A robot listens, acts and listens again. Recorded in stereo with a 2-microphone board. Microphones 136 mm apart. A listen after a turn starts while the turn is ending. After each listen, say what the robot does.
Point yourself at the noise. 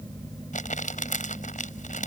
Turn 75° left.
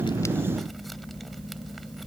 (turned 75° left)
Keep listening.
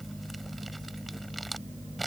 Keep listening.
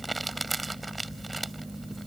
Found it: crumpling, straight ahead.